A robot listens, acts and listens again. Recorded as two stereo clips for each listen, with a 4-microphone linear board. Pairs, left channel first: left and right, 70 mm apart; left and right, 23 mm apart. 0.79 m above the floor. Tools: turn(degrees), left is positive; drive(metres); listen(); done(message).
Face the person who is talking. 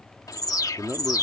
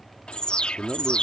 turn(degrees=-30)
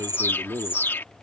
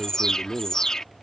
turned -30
turn(degrees=-120)
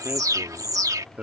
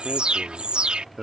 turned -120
turn(degrees=-20)
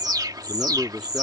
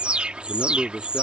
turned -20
done("Found it: a man speaking, straight ahead.")